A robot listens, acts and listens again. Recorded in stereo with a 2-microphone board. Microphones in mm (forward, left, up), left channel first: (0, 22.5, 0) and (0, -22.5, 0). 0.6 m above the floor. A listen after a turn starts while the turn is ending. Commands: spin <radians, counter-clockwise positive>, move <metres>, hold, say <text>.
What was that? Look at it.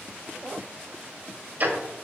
spin -0.79
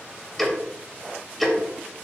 say Facing the ticking.